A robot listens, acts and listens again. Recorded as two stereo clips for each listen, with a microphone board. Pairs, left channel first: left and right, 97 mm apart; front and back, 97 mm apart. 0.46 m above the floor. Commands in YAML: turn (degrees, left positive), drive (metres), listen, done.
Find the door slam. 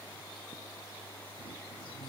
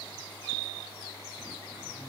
listen: true
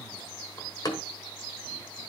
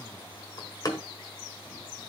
turn: 45
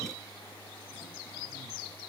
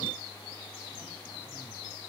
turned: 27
turn: 15
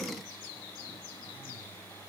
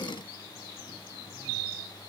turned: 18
done: "Facing where the door slam came from. I can't hear it now."